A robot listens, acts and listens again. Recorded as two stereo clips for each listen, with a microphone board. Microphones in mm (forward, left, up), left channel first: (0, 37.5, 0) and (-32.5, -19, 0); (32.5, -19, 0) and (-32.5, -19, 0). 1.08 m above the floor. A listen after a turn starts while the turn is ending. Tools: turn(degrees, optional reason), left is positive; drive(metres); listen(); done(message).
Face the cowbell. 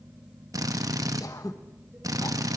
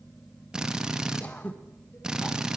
listen()
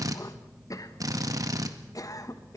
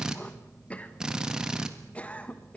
listen()
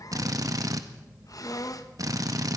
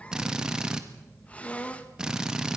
done("I can't make out a cowbell to turn to.")